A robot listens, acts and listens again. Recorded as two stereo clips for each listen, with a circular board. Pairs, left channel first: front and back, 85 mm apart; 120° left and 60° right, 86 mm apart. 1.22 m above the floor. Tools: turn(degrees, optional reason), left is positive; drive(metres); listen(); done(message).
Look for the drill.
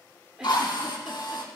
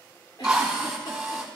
turn(degrees=20, reason="The drill: 20° left.")
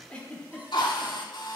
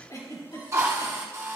done("Facing the drill, 2 to 4 m away.")